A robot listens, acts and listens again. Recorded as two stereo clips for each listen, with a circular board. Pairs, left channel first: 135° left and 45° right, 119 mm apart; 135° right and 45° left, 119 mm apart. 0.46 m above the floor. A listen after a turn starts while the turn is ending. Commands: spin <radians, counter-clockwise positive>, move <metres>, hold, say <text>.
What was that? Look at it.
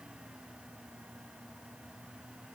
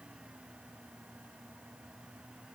hold
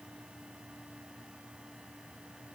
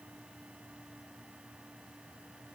hold
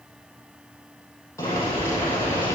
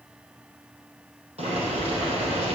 spin 1.22
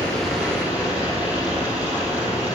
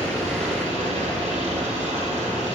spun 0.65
spin 0.61
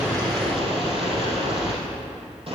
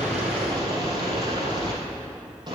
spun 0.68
say Facing the boiling.